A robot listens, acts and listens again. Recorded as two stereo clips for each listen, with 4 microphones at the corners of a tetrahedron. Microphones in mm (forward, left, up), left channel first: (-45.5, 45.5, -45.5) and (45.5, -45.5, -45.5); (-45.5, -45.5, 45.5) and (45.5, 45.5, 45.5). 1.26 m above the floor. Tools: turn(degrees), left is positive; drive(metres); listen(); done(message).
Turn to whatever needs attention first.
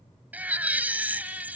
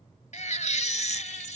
turn(degrees=-120)
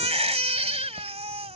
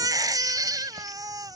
turn(degrees=-15)
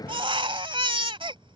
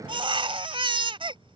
done("Facing the baby crying.")